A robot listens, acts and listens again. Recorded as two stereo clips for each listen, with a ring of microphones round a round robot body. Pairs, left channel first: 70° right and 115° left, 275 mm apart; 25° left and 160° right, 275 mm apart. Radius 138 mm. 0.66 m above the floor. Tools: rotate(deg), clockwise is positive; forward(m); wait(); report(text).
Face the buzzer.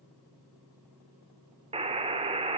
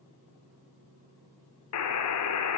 rotate(-45)
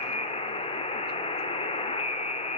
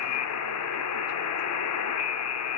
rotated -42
report("Found it: a buzzer, straight ahead.")